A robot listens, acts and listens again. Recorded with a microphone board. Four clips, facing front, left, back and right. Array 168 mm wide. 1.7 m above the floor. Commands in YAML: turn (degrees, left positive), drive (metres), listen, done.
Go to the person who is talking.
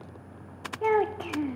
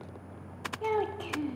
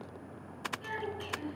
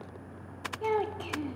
drive: 1.0
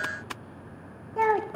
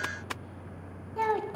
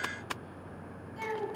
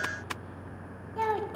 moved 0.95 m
drive: 1.0
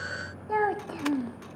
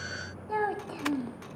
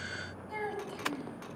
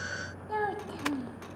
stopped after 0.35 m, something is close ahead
turn: 10
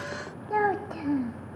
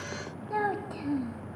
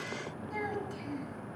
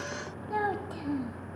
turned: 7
done: "I am next to the child speaking."